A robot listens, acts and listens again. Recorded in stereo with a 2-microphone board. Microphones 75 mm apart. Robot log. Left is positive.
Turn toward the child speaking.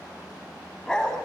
cmd idle
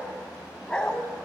cmd idle
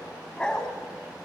end: I can't make out a child speaking, only a dog barking.